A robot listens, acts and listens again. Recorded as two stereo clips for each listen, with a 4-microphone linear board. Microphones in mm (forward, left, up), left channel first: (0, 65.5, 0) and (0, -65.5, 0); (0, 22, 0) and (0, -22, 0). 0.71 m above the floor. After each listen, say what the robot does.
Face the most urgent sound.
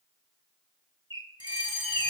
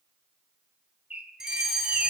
Turn 30° right.
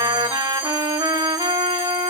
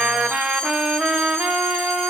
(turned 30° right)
Keep listening.
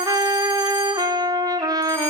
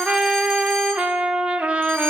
Keep listening.
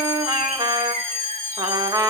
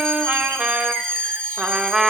Turn 15° left.
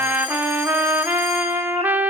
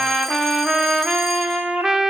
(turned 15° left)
Keep listening.
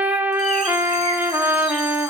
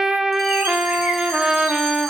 Keep listening.
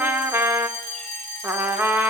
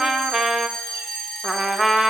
Found it: a fire alarm, straight ahead.